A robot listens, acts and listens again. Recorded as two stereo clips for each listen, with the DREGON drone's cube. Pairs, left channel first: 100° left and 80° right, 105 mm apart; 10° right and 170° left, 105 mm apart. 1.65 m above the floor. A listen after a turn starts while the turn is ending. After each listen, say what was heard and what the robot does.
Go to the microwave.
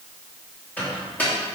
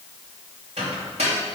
The microwave: 175° left. Turn 175° left.
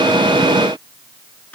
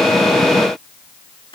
Keep listening.
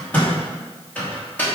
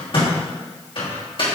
The microwave is now 25° left. Turn 25° left.
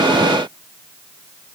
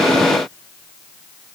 Keep listening.
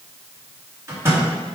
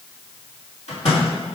The microwave is now 15° right. Turn 15° right.
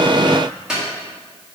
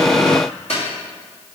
Drive 1.0 m forward.
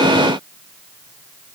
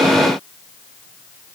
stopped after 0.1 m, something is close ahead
Keep listening.
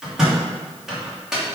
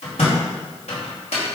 Something is in my way. I am facing the microwave but have not reached it.